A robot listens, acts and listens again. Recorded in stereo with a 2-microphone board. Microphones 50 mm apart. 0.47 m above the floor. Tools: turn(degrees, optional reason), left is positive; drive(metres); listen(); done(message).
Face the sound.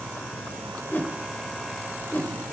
turn(degrees=45, reason="The whoosh: about 45° left or 135° left.")
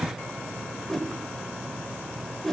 done("Facing the whoosh.")